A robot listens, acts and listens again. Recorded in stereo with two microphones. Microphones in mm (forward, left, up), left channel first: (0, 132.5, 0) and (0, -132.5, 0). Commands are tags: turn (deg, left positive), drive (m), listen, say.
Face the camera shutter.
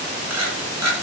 <turn deg="-90"/>
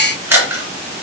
<turn deg="-10"/>
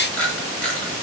<say>Found it: a camera shutter, straight ahead, 2 to 4 m away.</say>